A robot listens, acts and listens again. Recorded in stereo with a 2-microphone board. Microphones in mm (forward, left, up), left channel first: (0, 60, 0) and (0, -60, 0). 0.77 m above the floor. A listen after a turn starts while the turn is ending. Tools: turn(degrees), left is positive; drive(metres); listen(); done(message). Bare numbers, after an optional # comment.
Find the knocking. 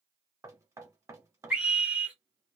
# The knocking: about 25° right or 155° right.
turn(-25)
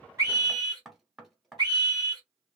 done("Found it: knocking, straight ahead, under 1 m away.")